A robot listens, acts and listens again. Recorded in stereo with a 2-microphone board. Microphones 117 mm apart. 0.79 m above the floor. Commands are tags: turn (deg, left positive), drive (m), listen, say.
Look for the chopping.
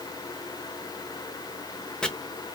<turn deg="30"/>
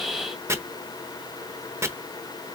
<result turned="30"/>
<turn deg="-25"/>
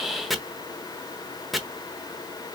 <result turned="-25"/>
<say>Facing the chopping, under 1 m away.</say>